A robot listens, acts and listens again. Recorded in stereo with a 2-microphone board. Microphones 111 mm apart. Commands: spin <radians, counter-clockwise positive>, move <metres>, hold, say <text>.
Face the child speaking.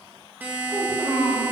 spin -1.13
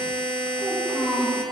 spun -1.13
say Found it: a child speaking, straight ahead, 2 to 4 m away.